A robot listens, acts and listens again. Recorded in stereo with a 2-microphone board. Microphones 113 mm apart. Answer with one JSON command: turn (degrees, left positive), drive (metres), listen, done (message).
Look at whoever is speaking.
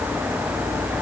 {"listen": true}
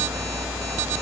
{"listen": true}
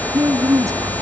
{"turn": -30}
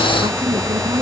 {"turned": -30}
{"listen": true}
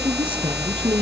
{"listen": true}
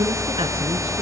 {"done": "I heard a woman speaking, but can't make it out now. It was about straight ahead or 120° right."}